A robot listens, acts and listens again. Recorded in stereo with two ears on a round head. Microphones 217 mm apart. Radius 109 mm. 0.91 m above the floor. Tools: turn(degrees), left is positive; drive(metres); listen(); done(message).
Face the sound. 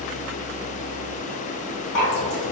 turn(degrees=50)
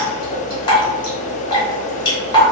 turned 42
turn(degrees=20)
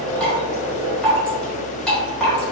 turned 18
done("Facing the dripping, under 1 m away.")